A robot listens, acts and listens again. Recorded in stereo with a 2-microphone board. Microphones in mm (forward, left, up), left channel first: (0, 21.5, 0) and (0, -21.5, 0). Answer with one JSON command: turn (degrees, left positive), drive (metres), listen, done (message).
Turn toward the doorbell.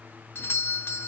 {"turn": 65}
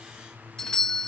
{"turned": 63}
{"turn": 15}
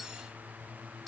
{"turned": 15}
{"listen": true}
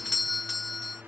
{"done": "Facing the doorbell."}